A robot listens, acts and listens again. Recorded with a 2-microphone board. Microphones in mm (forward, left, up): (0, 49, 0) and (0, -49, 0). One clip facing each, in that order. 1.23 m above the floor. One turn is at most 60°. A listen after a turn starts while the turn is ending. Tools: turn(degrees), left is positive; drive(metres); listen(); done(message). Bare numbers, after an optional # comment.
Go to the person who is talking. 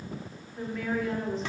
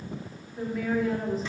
turn(-30)
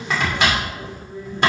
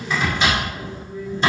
# So it is at 25° left.
turn(25)
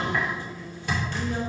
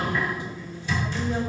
listen()
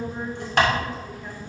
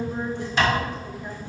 # The woman speaking is now 15° right.
turn(-15)
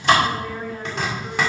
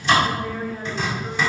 drive(1.0)
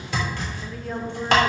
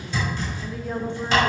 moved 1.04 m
drive(1.0)
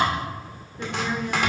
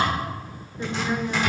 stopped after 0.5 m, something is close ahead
# The woman speaking is now 10° right.
turn(-10)
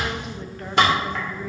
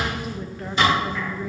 listen()
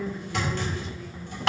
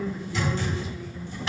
done("Arrived at the woman speaking, straight ahead.")